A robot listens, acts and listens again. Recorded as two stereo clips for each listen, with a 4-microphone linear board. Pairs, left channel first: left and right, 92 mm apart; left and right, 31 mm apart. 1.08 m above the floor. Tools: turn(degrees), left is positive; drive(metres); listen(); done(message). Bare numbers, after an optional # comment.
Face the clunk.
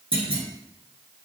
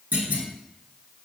turn(-90)
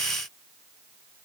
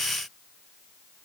done("Facing where the clunk came from. I can't hear it now.")